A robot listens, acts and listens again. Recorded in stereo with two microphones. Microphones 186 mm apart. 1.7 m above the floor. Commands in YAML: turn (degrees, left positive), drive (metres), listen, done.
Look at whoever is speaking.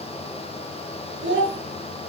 turn: -90
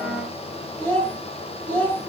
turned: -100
done: "Found it: a child speaking, straight ahead."